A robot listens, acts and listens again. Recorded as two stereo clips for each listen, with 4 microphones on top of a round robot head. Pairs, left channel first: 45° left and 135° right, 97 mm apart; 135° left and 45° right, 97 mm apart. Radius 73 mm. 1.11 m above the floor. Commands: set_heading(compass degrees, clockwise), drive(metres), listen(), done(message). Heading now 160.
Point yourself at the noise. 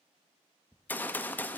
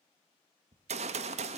set_heading(190)
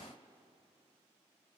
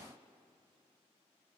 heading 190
done("Facing where the gunshot came from. I can't hear it now.")